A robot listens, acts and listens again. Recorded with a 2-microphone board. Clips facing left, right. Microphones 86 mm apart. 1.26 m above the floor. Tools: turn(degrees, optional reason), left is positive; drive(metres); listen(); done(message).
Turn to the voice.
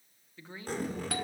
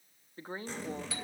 turn(degrees=-40, reason="The woman speaking: about 40° right or 140° right.")
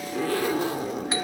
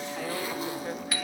listen()
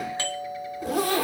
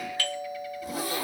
listen()
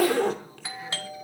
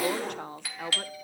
turn(degrees=-95, reason="So it is at 95° right.")
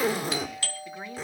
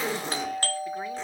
listen()
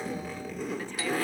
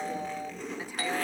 listen()
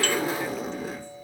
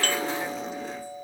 done("I heard a woman speaking from this way, but can't make it out now.")